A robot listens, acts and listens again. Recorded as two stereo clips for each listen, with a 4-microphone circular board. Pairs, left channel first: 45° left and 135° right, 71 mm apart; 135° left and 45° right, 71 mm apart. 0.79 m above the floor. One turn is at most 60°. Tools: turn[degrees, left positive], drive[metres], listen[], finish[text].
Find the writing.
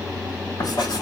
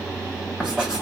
Thought: The writing: 35° left.
Action: turn[35]
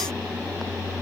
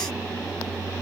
Action: listen[]
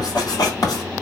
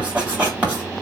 Thought: The writing is now 25° left.
Action: turn[25]
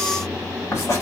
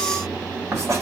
Action: finish[Facing the writing, 2 to 4 m away.]